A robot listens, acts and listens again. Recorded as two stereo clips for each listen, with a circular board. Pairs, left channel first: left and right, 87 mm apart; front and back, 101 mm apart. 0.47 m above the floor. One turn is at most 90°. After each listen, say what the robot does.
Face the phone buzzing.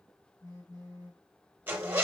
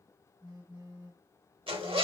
Turn 90° left.
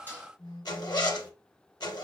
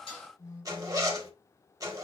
Turn 50° left.
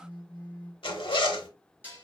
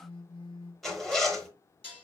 Turn 10° left.
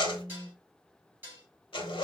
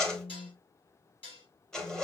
Turn 10° left.
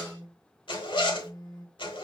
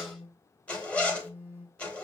Facing the phone buzzing.